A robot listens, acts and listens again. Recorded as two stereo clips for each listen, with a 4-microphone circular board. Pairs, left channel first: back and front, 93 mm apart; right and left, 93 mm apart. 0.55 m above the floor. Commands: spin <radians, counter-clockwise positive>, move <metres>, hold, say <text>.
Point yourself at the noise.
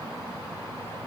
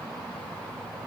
hold
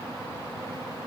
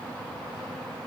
hold
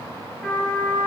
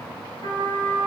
spin -1.66
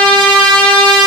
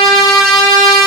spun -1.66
say Facing the trumpet.